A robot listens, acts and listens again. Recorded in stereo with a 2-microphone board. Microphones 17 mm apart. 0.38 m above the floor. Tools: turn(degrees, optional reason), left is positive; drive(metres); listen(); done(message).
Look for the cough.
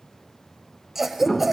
turn(degrees=-20, reason="The cough: about 20° right or 160° right.")
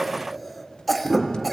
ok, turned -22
done("Facing the cough, 1 to 2 m away.")